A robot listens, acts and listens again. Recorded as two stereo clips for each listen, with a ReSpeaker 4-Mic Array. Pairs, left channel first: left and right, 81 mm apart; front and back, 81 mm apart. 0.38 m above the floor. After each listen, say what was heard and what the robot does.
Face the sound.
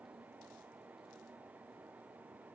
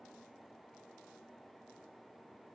Keep listening.
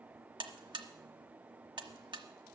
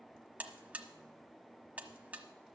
The buzzer: 110° right. Turn 110° right.
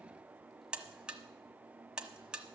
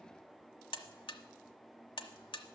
The buzzer is now 10° right. Turn 10° right.
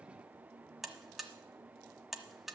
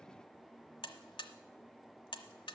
Found it: a buzzer, straight ahead, 1 to 2 m away.